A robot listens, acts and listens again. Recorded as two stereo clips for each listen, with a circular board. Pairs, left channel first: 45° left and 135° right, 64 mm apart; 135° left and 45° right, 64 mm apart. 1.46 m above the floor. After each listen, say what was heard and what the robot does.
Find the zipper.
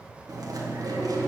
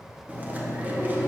Keep listening.
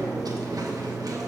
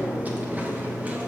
Keep listening.
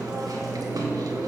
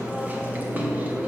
I can't make out a zipper to turn to.